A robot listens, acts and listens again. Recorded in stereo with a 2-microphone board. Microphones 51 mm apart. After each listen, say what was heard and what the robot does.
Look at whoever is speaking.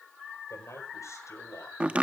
Turn 90° left.
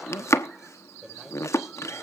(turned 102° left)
So it is at 10° right. Turn 10° right.
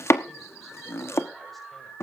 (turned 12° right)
Keep listening.
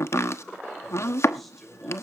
Found it: a man speaking, straight ahead, over 4 m away.